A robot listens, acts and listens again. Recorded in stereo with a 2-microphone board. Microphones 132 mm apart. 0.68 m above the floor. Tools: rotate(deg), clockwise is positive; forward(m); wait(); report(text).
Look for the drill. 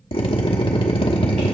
rotate(-45)
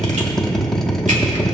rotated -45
report("Found it: a drill, straight ahead.")